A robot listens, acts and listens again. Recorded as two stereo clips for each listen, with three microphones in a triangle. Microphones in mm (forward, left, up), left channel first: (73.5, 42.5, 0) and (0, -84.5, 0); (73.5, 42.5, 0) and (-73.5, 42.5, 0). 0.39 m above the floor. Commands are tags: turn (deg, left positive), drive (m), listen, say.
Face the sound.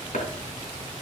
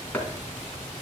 <turn deg="75"/>
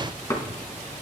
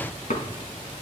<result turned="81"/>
<say>Found it: chopping, straight ahead, 2 to 4 m away.</say>